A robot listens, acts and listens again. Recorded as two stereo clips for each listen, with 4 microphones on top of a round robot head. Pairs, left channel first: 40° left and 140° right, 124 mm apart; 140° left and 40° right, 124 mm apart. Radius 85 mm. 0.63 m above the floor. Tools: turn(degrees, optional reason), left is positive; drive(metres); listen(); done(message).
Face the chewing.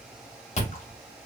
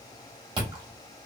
turn(degrees=15, reason="The chewing: 15° left.")
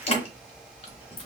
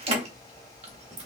done("Facing the chewing, under 1 m away.")